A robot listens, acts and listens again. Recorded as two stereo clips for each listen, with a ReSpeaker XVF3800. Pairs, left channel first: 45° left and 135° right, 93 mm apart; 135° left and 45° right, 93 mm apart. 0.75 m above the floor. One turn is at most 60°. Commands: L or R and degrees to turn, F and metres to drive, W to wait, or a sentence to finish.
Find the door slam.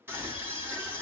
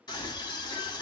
W
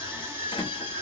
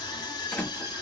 L60
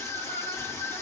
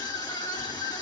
Facing where the door slam came from. I can't hear it now.